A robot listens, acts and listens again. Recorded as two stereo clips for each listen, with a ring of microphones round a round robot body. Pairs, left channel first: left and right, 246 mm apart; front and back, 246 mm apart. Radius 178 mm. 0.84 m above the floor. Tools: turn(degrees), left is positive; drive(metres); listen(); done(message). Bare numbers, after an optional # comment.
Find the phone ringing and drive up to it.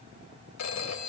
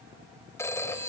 # The phone ringing: 80° left.
turn(80)
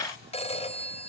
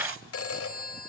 # The phone ringing is now 25° left.
turn(25)
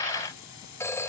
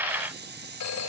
# The phone ringing is now 10° left.
turn(10)
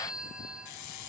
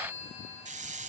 drive(1.0)
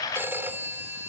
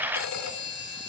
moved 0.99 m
# The phone ringing is now 10° right.
turn(-10)
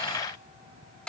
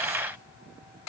drive(1.0)
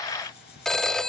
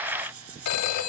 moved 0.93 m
drive(1.0)
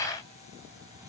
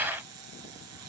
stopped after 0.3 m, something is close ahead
listen()
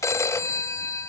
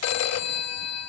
# The phone ringing is now 10° left.
turn(10)
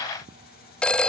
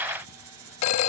done("Arrived at the phone ringing, straight ahead.")